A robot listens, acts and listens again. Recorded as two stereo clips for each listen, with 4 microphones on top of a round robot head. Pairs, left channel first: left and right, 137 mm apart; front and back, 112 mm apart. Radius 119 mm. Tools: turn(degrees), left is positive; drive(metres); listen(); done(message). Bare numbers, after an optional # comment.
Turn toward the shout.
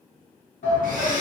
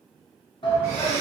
# The shout: 45° left.
turn(45)
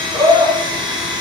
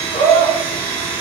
done("Facing the shout, under 1 m away.")